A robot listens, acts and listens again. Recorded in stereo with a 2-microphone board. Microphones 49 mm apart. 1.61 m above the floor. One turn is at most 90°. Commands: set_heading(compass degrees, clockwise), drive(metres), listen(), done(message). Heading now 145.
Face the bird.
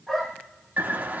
set_heading(185)
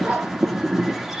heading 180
done("Facing the bird, 1 to 2 m away.")